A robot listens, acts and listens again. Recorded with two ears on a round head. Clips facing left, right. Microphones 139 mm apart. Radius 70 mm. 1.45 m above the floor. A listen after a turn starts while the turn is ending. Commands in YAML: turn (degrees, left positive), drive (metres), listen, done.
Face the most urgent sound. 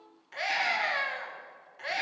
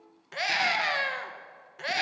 turn: -55
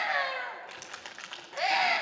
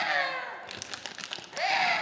done: "Found it: a scream, straight ahead, 1 to 2 m away."